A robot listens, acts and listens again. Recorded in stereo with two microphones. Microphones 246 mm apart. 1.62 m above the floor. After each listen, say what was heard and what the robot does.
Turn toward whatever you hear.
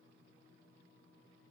Keep listening.
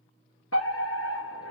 The fire alarm: about 70° left or 110° left. Turn 70° left.
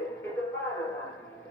So it is at 10° left. Turn 10° left.
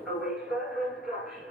Found it: a fire alarm, straight ahead.